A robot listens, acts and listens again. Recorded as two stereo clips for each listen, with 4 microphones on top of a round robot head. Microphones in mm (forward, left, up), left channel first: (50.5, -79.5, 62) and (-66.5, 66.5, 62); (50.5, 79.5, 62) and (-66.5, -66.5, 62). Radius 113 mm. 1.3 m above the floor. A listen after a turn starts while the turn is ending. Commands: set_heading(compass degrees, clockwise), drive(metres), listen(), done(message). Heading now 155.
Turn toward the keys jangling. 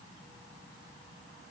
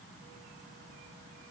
listen()
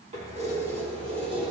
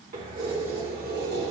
set_heading(320)
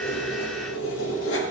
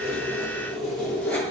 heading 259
set_heading(289)
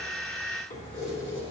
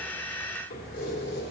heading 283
set_heading(273)
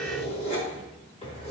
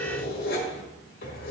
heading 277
done("Facing the keys jangling.")